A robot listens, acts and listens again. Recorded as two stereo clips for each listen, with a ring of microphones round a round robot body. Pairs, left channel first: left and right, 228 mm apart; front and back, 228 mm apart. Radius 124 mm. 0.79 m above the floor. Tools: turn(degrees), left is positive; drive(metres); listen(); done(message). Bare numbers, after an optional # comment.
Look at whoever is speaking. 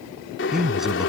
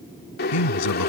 done("Found it: a man speaking, straight ahead.")